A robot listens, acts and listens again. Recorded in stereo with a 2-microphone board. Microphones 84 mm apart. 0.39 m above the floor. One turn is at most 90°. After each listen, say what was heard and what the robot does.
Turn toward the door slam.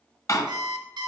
The door slam: about 40° left or 140° left. Turn 40° left.
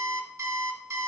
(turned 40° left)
Keep listening.
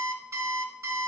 I heard a door slam, but can't make it out now. It was about straight ahead or 100° left.